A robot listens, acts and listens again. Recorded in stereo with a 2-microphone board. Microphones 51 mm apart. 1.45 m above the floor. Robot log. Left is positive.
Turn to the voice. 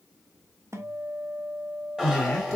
note: The man speaking: about 20° left or 160° left.
cmd yaw +20
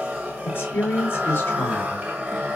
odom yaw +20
note: So it is at 135° left.
cmd yaw +135
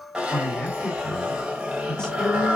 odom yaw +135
note: The man speaking is now 10° left.
cmd yaw +10
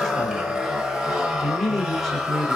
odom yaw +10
end: Found it: a man speaking, straight ahead.